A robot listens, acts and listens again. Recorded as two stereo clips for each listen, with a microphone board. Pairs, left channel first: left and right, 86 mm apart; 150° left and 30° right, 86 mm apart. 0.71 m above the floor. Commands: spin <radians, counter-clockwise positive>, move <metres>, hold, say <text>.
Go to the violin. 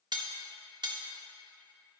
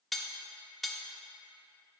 hold
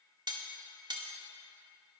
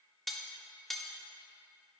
hold
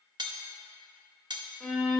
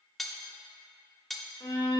spin -3.05
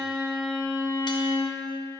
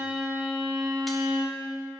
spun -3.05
spin 0.17
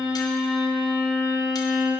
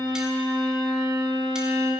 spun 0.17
move 1.0
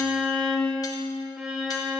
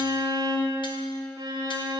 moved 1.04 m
move 1.0
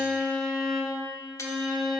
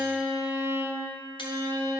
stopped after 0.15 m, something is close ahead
say I am next to the violin.